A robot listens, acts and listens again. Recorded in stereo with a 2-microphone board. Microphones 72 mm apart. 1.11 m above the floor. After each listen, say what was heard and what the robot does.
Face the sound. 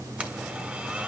The blender: about 15° right or 165° right. Turn 15° right.
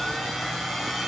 Facing the blender.